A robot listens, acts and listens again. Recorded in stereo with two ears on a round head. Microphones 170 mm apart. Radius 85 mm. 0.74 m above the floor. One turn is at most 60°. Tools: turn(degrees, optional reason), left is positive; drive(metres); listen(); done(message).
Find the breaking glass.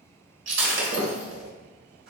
turn(degrees=-60, reason="The breaking glass: about 70° right or 110° right.")
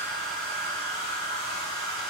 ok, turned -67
listen()
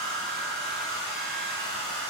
done("I heard breaking glass, but can't make it out now. It was about straight ahead or 45° right.")